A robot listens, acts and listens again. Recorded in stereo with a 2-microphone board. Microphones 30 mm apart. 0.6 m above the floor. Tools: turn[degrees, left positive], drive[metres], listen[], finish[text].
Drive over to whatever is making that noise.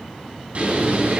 Thought: The bird: about 60° right or 120° right.
Action: turn[-60]
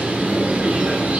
Thought: So it is at 60° right.
Action: turn[-60]
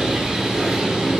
Thought: The bird is now 15° right.
Action: turn[-15]
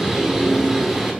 Action: drive[1.0]
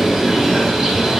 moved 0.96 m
Action: drive[1.0]
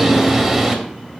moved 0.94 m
Action: drive[1.0]
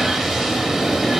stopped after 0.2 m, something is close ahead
Action: finish[Arrived at the bird, straight ahead.]